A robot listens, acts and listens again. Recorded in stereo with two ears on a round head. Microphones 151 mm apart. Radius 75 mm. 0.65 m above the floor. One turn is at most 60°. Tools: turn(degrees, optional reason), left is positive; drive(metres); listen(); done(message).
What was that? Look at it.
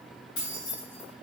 turn(degrees=60)
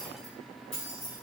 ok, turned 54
turn(degrees=35, reason="So it is at 35° left.")
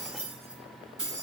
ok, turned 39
done("Found it: keys jangling, straight ahead, over 4 m away.")